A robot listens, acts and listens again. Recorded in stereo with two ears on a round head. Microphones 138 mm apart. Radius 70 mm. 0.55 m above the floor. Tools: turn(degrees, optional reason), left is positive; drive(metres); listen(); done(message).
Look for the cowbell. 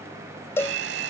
turn(degrees=15, reason="The cowbell: about 15° left or 165° left.")
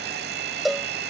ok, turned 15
done("Facing the cowbell.")